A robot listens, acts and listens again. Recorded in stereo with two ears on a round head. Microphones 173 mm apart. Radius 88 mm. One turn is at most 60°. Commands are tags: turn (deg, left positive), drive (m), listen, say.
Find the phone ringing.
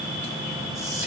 <listen/>
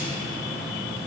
<listen/>
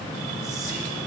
<say>I can't make out a phone ringing to turn to.</say>